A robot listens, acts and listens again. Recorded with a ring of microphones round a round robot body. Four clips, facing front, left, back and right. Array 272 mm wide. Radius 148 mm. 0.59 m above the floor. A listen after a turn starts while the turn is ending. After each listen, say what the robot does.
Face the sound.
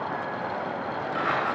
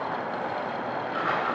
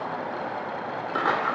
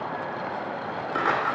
Turn 145° right.
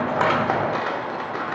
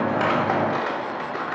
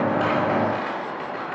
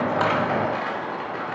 Turn 30° left.
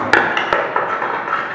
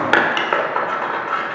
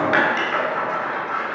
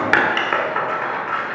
Turn 15° left.
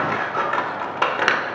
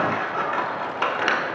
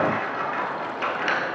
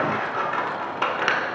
Found it: scissors, straight ahead, 1 to 2 m away.